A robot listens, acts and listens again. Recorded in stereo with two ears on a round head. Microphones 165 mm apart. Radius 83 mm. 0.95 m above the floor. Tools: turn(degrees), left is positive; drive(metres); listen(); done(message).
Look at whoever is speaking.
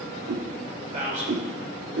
turn(degrees=-40)
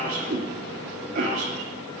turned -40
turn(degrees=-100)
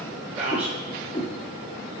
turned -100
done("Found it: a man speaking, straight ahead.")